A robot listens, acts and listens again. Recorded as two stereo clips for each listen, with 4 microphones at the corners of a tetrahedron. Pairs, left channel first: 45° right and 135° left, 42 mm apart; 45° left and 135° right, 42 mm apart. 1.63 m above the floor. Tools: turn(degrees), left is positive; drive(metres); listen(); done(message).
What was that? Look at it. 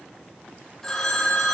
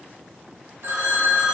turn(degrees=-120)
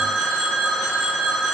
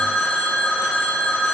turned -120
turn(degrees=20)
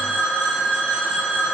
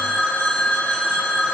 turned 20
done("Found it: a phone ringing, straight ahead, 1 to 2 m away.")